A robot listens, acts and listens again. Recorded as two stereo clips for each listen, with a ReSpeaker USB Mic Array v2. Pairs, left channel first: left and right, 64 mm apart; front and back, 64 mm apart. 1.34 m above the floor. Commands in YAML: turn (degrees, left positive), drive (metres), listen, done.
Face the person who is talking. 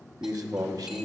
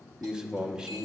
turn: -105
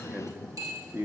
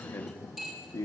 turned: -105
turn: -30
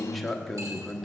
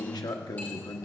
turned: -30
done: "Found it: a man speaking, straight ahead."